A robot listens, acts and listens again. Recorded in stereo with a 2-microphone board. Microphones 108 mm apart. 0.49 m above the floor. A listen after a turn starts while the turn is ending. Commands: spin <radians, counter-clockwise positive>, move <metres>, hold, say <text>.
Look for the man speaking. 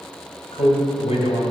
spin 1.13
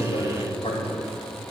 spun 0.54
spin 1.05
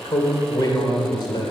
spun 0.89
spin 0.87
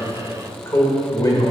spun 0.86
spin 0.70
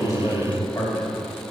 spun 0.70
spin 0.35
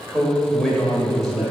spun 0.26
say Facing the man speaking, 1 to 2 m away.